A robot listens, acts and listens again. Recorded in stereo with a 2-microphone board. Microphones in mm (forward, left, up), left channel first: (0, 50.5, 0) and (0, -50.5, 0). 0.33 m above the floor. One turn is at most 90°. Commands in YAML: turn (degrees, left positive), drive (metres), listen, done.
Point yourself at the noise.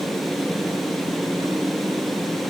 listen: true
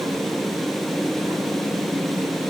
listen: true
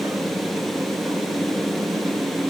done: "I can't make out anything."